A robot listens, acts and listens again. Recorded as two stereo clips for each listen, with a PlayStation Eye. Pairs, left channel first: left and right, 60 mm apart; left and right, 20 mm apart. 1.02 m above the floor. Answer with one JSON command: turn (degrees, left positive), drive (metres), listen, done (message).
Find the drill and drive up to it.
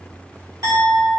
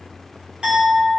{"listen": true}
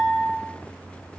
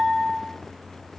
{"listen": true}
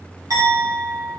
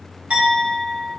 {"done": "I can't make out a drill to turn to."}